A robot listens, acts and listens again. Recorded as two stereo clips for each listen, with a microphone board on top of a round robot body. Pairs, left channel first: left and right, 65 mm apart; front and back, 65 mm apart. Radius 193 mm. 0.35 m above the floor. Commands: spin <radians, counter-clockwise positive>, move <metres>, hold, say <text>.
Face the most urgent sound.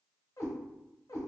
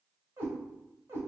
hold
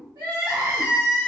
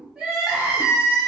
spin -1.83
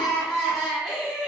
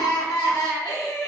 say Found it: crying, straight ahead.